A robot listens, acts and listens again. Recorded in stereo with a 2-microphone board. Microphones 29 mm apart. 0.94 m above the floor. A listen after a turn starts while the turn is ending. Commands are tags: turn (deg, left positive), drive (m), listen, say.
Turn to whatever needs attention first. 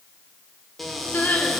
<turn deg="70"/>
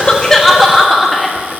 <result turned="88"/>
<say>Found it: crying, straight ahead, 1 to 2 m away.</say>